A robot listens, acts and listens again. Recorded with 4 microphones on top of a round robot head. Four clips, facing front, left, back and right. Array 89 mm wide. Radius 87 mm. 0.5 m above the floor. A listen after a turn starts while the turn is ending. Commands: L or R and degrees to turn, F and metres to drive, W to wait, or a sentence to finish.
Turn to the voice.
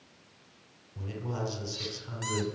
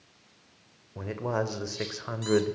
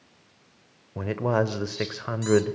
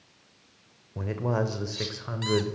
L165
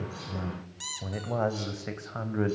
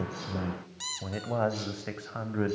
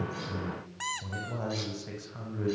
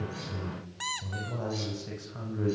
L40
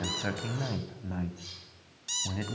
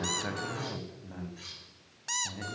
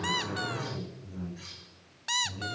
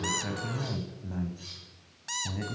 R10
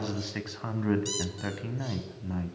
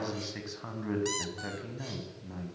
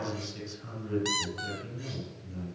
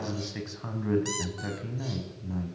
Facing the man speaking.